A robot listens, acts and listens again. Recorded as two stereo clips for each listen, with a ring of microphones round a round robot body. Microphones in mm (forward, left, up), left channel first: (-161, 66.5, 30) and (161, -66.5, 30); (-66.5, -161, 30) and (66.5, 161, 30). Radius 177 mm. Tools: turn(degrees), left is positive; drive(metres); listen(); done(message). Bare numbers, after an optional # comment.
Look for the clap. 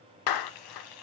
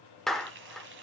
# The clap: 160° left.
turn(160)
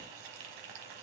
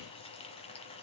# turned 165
listen()
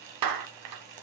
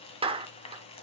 done("Facing the clap.")